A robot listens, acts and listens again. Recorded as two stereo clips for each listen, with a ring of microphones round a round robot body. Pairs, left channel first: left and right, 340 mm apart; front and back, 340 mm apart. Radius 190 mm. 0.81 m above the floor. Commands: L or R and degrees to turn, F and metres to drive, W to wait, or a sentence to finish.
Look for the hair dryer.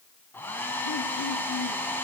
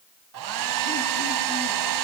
L175
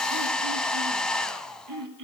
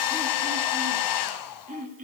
Found it: a hair dryer, straight ahead, 1 to 2 m away.